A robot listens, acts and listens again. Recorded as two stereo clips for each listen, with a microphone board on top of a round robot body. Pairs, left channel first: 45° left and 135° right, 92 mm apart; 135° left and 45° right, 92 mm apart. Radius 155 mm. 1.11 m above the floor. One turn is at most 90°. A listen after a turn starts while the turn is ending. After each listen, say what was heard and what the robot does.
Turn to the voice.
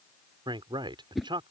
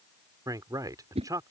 The man speaking: 95° right. Turn 90° right.
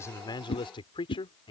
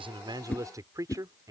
The man speaking is now 10° left. Turn 10° left.
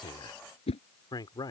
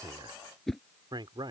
Facing the man speaking.